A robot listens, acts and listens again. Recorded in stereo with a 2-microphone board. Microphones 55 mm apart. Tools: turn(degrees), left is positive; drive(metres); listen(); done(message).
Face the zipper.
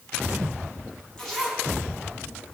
turn(degrees=30)
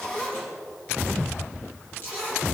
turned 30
turn(degrees=145)
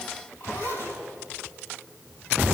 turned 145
turn(degrees=45)
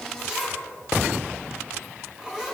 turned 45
done("Found it: a zipper, straight ahead, over 4 m away.")